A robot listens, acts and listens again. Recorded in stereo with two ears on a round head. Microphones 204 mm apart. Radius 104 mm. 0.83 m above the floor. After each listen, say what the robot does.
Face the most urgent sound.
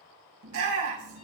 Turn 90° right.
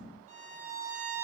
Keep listening.
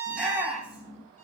Facing the shout.